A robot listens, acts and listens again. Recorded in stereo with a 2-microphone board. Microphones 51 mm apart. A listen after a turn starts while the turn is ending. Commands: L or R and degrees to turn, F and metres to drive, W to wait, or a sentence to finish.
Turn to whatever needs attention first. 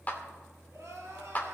R70
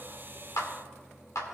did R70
W
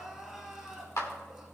Facing the crying, 2 to 4 m away.